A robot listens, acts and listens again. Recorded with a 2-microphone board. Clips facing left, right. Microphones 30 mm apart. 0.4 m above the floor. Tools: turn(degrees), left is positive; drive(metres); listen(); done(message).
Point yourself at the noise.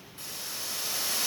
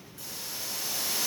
turn(degrees=45)
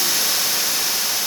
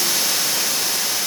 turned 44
turn(degrees=15)
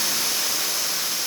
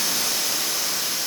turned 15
done("Facing the hiss, 1 to 2 m away.")